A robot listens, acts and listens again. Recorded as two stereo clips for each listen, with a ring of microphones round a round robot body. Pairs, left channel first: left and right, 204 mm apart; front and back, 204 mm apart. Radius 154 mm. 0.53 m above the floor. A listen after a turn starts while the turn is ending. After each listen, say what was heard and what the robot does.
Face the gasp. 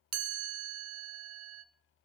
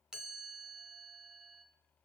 Keep listening.
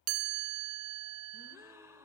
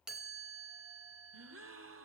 The gasp: 170° right. Turn 170° right.
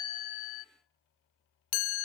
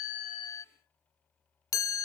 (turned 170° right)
I heard a gasp from this way, but can't make it out now.